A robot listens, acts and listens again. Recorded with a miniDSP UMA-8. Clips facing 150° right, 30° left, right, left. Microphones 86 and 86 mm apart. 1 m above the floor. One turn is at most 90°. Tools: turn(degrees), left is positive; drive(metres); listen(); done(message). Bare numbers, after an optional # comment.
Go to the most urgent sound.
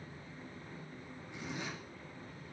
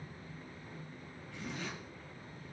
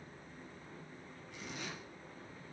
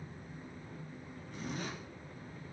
listen()
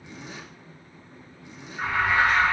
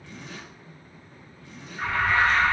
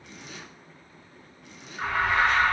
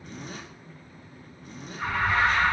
# The alarm: 75° right.
turn(-75)
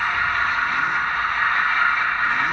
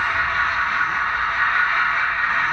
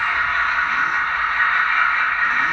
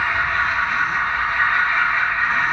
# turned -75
# The alarm is now 20° left.
turn(20)
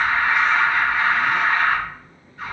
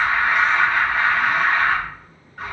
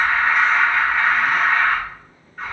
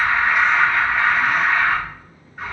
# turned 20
drive(1.0)
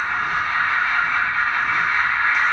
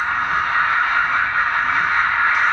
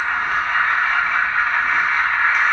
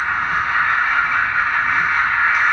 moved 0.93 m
drive(1.0)
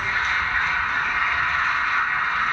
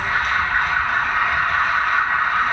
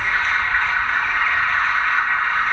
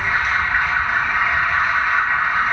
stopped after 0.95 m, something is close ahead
# The alarm is now 15° left.
turn(15)
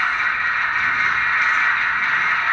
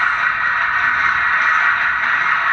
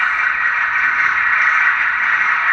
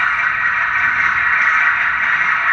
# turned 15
done("I am next to the alarm.")